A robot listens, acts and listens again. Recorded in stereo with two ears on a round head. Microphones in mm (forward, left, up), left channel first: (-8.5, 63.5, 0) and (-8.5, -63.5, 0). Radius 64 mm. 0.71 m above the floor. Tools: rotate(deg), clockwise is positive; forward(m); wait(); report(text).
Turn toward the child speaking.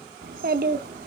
rotate(65)
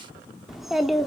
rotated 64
report("Found it: a child speaking, straight ahead.")